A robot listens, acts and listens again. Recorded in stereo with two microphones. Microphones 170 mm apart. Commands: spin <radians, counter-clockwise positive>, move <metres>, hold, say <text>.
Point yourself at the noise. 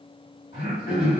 spin 1.05
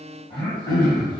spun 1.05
spin 0.52
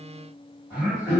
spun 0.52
spin -0.26
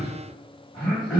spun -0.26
say Facing the throat clearing.